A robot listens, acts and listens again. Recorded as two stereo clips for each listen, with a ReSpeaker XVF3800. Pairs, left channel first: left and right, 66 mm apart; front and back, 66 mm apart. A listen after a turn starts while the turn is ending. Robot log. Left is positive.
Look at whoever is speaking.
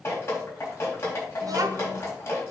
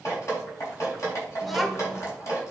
note: The child speaking: 90° right.
cmd yaw -90
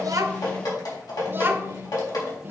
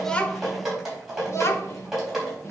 note: The child speaking is now 35° right.
cmd yaw -35
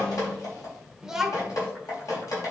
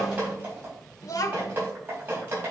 note: The child speaking is now 10° right.
cmd yaw -10
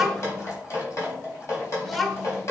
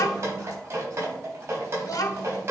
end: Found it: a child speaking, straight ahead.